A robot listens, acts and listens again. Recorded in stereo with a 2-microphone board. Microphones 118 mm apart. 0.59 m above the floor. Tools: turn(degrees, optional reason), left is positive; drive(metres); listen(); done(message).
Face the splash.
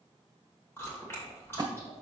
turn(degrees=-40, reason="The splash: about 40° right or 140° right.")
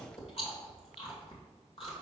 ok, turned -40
listen()
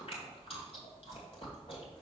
done("I heard a splash, but can't make it out now. It was about straight ahead or 100° right.")